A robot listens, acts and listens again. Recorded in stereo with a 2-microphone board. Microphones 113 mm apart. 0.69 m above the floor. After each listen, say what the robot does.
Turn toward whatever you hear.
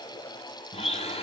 Turn 65° left.
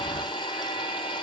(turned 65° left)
Turn 45° left.
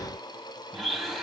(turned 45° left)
Found it: a blender, straight ahead.